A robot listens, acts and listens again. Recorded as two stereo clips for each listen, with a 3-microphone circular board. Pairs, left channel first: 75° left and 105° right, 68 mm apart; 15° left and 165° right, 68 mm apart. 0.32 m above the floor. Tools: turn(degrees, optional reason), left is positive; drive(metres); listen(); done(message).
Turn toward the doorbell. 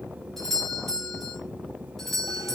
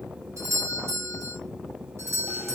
turn(degrees=160, reason="The doorbell: 160° left.")
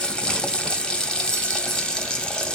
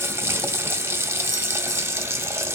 listen()
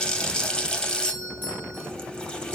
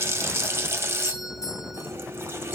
turn(degrees=20, reason="The doorbell is now 20° left.")
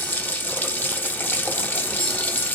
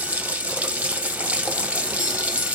listen()
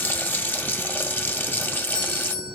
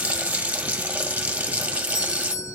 done("Found it: a doorbell, straight ahead, 2 to 4 m away.")